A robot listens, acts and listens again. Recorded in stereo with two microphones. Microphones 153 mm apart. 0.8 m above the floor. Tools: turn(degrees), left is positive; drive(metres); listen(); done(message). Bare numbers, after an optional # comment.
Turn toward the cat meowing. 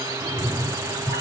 # The cat meowing: about 35° left or 145° left.
turn(35)
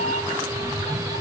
# So it is at 105° left.
turn(105)
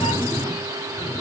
# The cat meowing is now 50° left.
turn(50)
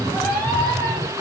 # The cat meowing is now 15° left.
turn(15)
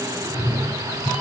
done("Facing the cat meowing, 1 to 2 m away.")